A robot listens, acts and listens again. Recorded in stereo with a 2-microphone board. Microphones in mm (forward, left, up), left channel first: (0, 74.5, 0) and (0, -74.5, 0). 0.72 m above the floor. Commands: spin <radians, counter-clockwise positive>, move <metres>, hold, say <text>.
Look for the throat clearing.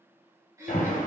spin -0.35
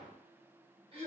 spin -2.36
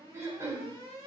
spin -0.35
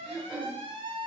say Found it: throat clearing, straight ahead, 2 to 4 m away.